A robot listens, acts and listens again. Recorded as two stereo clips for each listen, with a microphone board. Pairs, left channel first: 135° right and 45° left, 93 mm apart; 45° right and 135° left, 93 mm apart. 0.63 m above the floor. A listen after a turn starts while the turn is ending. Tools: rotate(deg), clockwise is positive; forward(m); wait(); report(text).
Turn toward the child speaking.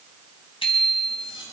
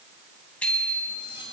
wait()
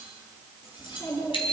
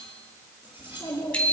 rotate(95)
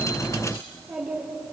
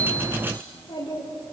rotate(40)
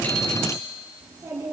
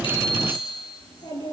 rotate(25)
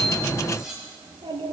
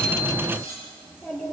rotate(-25)
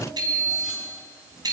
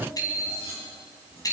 rotate(-25)
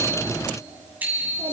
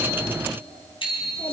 report("Found it: a child speaking, straight ahead.")